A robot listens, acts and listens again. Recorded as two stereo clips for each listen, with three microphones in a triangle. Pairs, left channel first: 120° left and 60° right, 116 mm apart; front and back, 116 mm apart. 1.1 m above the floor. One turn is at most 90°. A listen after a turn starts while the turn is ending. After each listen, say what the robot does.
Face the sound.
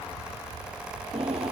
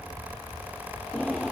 Turn 85° right.
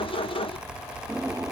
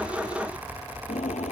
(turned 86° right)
Facing the drawer.